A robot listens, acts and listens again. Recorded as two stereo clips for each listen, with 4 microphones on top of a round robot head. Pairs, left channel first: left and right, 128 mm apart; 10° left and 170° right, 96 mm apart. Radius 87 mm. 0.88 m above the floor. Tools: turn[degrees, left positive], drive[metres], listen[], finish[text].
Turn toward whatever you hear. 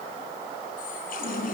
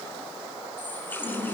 Thought: The running tap: 80° left.
Action: turn[80]
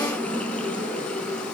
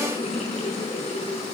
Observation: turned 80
Thought: The running tap is now 10° left.
Action: turn[10]
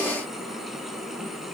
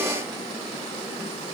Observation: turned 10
Action: listen[]
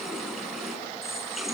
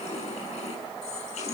Action: finish[Facing the running tap.]